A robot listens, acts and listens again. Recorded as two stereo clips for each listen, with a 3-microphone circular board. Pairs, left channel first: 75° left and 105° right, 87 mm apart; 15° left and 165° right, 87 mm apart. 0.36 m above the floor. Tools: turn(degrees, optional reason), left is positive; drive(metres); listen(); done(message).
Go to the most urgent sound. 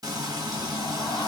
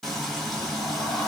listen()
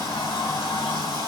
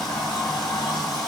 listen()
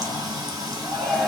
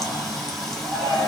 turn(degrees=-35, reason="The shout: 35° right.")
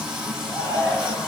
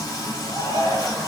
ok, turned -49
turn(degrees=15, reason="The shout is now 15° left.")
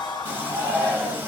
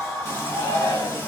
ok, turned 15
drive(metres=1.0)
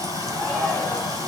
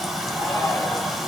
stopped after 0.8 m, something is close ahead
listen()
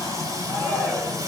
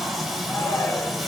done("I am next to the shout.")